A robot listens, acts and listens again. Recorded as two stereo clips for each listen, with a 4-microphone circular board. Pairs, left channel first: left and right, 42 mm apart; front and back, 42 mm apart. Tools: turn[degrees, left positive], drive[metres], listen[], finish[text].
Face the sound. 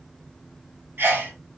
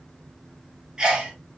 Thought: The sneeze: 110° right.
Action: turn[-110]
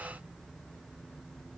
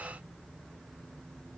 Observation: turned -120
Thought: Nothing new. It was at 10° left.
Action: turn[10]
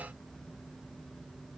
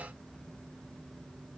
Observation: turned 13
Action: finish[Facing where the sneeze came from. I can't hear it now.]